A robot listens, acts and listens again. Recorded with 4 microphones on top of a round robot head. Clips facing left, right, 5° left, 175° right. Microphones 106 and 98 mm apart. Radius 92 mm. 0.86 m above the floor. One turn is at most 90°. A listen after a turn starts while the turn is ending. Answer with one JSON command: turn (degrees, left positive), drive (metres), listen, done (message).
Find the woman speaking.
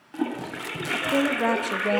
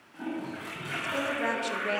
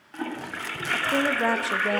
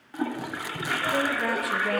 {"turn": 65}
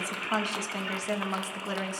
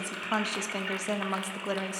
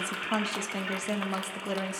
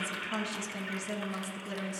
{"turn": -15}
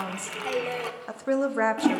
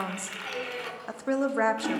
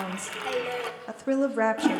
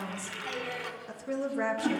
{"done": "Facing the woman speaking."}